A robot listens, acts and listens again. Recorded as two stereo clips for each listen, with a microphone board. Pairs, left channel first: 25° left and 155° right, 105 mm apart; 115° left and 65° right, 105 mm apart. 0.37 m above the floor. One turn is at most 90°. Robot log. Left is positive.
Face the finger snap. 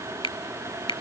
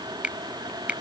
note: The finger snap: 10° left.
cmd yaw +10
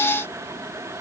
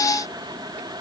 end: Facing the finger snap.